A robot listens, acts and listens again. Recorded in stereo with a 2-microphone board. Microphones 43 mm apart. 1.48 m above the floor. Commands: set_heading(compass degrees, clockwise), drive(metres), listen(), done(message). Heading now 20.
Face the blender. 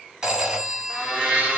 set_heading(40)
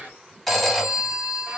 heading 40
set_heading(175)
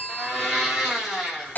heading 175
done("Found it: a blender, straight ahead, 1 to 2 m away.")